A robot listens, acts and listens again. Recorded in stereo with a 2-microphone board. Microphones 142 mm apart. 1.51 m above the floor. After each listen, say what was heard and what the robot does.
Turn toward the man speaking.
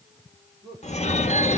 The man speaking: about 35° right or 145° right. Turn 35° right.
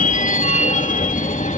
Keep listening.
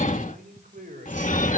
So it is at 95° right. Turn 95° right.
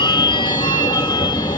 Keep listening.
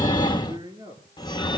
The man speaking is now 35° right. Turn 35° right.
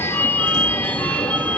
Keep listening.
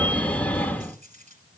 Keep listening.
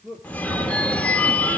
The man speaking is now 10° right. Turn 10° right.
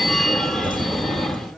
Keep listening.
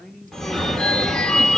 Facing the man speaking.